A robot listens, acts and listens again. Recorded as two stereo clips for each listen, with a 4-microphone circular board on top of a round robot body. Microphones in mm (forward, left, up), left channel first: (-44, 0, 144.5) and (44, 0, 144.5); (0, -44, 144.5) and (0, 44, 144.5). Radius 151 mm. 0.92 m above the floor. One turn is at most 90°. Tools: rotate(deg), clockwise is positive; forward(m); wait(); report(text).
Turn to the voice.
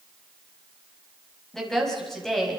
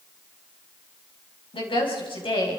rotate(90)
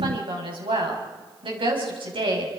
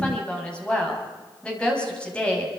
rotate(10)
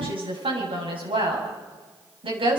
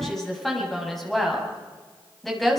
report("Facing the woman speaking, over 4 m away.")